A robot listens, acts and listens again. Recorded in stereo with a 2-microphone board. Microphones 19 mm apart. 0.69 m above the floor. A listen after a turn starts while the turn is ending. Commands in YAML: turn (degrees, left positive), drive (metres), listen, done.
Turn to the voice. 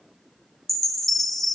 listen: true
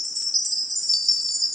listen: true
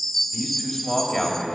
turn: 30
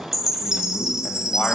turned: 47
turn: 140
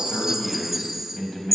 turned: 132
turn: 15
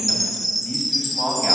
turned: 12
done: "Found it: a man speaking, straight ahead, 2 to 4 m away."